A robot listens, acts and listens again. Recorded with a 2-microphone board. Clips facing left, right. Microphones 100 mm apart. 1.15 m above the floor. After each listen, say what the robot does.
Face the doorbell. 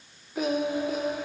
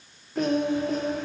Keep listening.
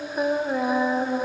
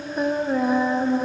Keep listening.
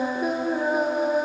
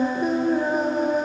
I can't make out a doorbell to turn to.